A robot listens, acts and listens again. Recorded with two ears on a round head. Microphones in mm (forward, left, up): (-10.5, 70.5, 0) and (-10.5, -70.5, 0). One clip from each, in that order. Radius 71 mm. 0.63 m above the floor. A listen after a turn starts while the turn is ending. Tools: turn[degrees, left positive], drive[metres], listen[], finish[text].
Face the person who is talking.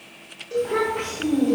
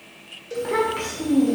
Thought: The child speaking: about 55° right or 125° right.
Action: turn[-55]
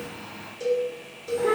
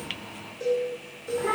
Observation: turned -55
Action: finish[Found it: a child speaking, straight ahead.]